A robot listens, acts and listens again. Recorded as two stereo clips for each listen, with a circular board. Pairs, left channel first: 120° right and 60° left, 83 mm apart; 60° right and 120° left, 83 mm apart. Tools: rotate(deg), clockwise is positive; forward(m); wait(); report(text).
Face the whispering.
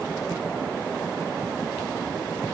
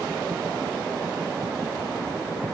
wait()
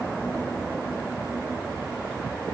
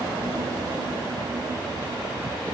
wait()
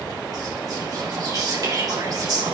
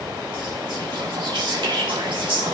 rotate(-100)
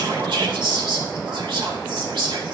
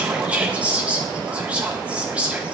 rotate(-45)
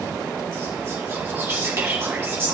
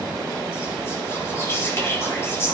report("Facing the whispering, 2 to 4 m away.")